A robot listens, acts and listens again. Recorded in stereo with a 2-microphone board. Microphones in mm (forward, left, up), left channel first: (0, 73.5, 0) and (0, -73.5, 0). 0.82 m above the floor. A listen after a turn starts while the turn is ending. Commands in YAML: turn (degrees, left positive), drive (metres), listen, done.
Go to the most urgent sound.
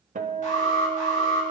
turn: 60
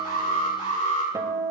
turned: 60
turn: 60
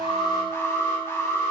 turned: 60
turn: 20
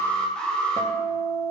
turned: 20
drive: 1.0
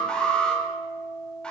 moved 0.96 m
drive: 1.0
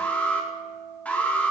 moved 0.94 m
turn: 10
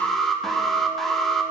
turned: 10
drive: 1.0
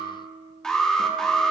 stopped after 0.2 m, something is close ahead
done: "I am next to the alarm."